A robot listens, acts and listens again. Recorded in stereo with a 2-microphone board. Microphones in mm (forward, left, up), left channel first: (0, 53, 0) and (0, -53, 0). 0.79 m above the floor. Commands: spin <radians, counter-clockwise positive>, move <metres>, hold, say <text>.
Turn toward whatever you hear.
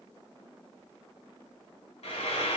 spin 1.57
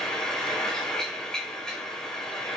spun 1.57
say Facing the frying, 2 to 4 m away.